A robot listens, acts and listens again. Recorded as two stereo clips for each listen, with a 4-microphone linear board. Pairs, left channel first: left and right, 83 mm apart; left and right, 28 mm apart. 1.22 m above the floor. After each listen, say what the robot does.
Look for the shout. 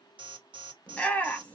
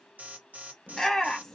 Turn 15° left.
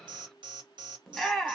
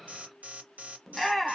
Facing the shout.